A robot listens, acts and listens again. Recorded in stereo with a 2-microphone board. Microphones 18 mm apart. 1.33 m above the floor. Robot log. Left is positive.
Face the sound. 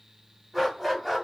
cmd yaw -30
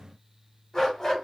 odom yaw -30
note: So it is at 30° left.
cmd yaw +30
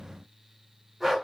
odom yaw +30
note: The dog barking is now 15° right.
cmd yaw -15
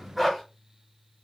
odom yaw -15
end: Found it: a dog barking, straight ahead, 2 to 4 m away.